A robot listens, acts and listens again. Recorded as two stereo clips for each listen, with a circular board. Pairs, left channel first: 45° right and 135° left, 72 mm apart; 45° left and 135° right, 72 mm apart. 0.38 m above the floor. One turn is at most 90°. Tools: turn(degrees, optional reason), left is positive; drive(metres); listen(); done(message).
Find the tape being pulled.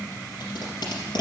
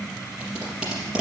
turn(degrees=-60, reason="The tape being pulled: 60° right.")
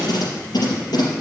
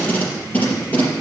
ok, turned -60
turn(degrees=-20, reason="The tape being pulled is now 20° right.")
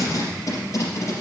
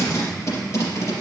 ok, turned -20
done("Facing the tape being pulled, over 4 m away.")